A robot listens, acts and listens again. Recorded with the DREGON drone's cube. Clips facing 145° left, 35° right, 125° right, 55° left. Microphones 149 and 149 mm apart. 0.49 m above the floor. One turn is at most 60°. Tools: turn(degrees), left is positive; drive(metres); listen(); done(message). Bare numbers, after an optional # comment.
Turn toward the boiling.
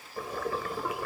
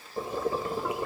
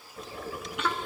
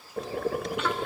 # The boiling: 30° left.
turn(30)
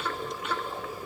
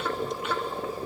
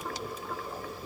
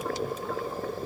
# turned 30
# The boiling is now 20° left.
turn(20)
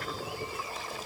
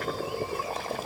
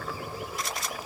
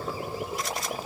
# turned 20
done("Found it: boiling, straight ahead.")